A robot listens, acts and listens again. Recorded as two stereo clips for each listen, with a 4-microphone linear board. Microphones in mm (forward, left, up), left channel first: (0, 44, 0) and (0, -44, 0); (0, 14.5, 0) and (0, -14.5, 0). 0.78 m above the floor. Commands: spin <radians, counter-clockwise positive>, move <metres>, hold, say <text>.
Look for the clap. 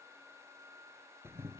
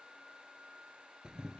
hold
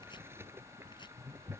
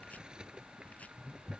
hold
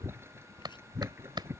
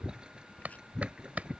spin -0.96
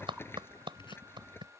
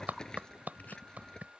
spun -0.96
spin -1.22
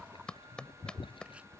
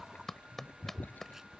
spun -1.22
spin 0.17
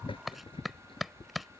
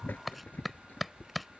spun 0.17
say Facing the clap.